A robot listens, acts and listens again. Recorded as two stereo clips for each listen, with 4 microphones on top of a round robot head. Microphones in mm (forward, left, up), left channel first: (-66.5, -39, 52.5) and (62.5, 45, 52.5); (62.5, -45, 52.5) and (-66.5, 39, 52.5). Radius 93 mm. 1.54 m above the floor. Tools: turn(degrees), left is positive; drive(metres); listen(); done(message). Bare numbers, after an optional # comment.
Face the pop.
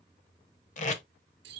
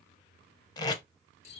listen()
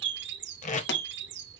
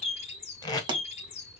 # The pop: 150° right.
turn(-150)
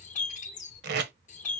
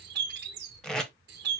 done("I heard a pop from this way, but can't make it out now.")